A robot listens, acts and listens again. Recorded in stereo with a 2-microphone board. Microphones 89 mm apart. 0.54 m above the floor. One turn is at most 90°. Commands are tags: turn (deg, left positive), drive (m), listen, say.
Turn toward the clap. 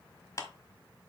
<turn deg="35"/>
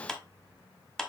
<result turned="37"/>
<say>Found it: a clap, straight ahead.</say>